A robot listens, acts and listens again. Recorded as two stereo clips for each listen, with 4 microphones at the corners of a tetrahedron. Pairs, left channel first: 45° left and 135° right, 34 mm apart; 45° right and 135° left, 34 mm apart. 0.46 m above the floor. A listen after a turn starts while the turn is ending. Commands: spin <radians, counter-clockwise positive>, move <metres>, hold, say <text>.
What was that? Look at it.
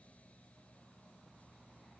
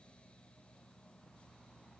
hold
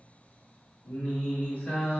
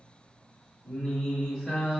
spin 0.35
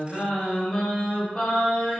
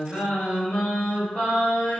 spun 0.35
say Facing the singing, 1 to 2 m away.